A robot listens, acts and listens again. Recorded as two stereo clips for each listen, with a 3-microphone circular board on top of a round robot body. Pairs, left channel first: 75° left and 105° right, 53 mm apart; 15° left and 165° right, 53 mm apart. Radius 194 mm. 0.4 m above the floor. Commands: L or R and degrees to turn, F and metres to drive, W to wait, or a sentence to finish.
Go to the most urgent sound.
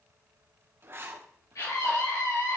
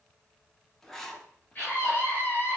L75
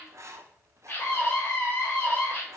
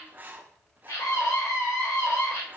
L30
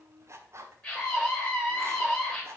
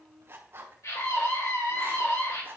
L15
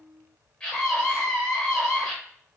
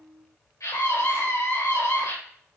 L10
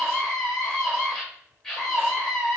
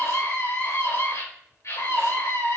F1.0
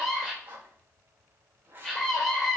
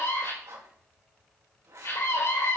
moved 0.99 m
F1.0
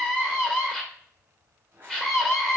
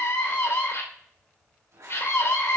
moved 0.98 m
F1.0
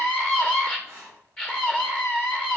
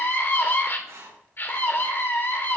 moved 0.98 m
L10
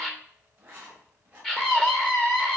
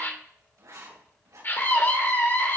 F1.0
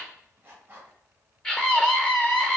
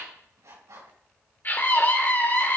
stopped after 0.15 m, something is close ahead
Arrived at the scream, straight ahead.